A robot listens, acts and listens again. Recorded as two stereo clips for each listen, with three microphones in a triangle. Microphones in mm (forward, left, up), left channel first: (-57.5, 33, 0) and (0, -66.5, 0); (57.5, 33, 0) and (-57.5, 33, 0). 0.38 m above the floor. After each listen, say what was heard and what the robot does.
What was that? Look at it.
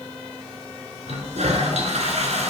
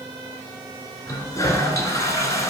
The toilet flushing: 60° right. Turn 60° right.
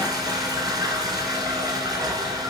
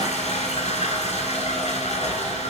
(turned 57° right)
Facing the toilet flushing.